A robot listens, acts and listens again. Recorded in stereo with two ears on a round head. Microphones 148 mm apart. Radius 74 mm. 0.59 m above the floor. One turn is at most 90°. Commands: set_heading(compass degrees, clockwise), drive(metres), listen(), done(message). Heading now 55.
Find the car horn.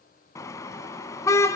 set_heading(35)
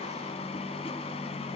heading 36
set_heading(306)
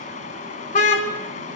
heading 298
set_heading(253)
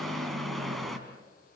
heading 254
done("Found it: a car horn, straight ahead, 2 to 4 m away.")